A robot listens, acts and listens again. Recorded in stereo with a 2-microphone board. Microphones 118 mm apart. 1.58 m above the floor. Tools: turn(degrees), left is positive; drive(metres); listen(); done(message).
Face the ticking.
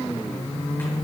listen()
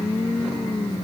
listen()
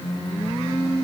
done("I can't make out ticking to turn to.")